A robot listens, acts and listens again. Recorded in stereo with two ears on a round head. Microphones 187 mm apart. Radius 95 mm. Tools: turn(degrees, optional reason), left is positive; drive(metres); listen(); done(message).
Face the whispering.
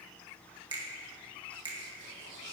listen()
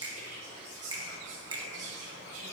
turn(degrees=-90)
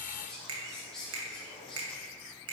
done("Found it: whispering, straight ahead, 2 to 4 m away.")